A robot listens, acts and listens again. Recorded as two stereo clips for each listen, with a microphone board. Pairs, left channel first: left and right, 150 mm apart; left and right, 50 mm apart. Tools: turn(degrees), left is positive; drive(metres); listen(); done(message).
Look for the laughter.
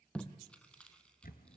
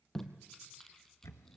listen()
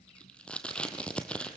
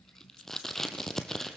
listen()
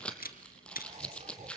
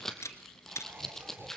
turn(degrees=-50)
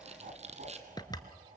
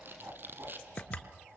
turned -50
turn(degrees=-60)
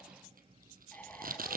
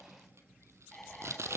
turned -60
turn(degrees=10)
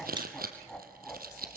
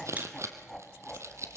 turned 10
done("Found it: laughter, straight ahead.")